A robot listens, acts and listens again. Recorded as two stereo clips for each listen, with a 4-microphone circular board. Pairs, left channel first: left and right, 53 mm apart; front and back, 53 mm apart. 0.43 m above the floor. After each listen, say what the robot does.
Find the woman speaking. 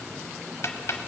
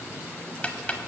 Keep listening.
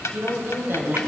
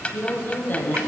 Turn 50° right.
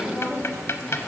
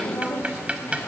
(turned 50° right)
Found it: a woman speaking, straight ahead.